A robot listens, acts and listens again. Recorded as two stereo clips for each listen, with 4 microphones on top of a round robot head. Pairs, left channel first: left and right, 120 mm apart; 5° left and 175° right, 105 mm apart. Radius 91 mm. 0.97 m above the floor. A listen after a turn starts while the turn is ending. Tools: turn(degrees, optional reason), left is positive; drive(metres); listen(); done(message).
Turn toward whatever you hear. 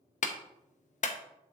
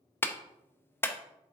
turn(degrees=75, reason="The clap: 75° left.")
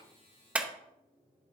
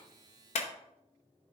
turn(degrees=-10, reason="The clap is now 10° right.")
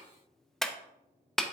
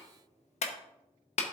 done("Found it: a clap, straight ahead, under 1 m away.")